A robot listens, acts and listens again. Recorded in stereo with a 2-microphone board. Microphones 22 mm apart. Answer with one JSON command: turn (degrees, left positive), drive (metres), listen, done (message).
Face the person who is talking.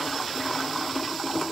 {"listen": true}
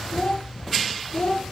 {"turn": 35}
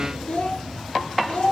{"turn": 120}
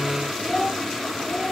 {"turn": -10}
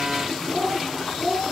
{"done": "Facing the child speaking, 2 to 4 m away."}